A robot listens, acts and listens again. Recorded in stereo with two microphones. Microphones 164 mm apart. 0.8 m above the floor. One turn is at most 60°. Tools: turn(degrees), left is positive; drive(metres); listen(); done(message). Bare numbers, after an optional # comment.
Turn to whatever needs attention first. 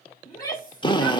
# The shout: about 25° left or 155° left.
turn(25)
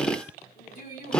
# So it is at 130° left.
turn(60)
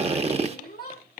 # The shout is now 85° left.
turn(60)
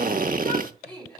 # The shout is now 10° left.
turn(10)
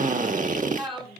done("Found it: a shout, straight ahead.")